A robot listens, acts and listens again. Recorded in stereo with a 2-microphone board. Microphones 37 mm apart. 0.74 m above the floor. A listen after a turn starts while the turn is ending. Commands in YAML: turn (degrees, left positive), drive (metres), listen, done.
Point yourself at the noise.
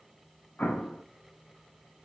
turn: 40
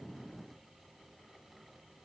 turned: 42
listen: true
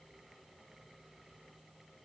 done: "I heard an explosion, but can't make it out now. It was about straight ahead or 95° left."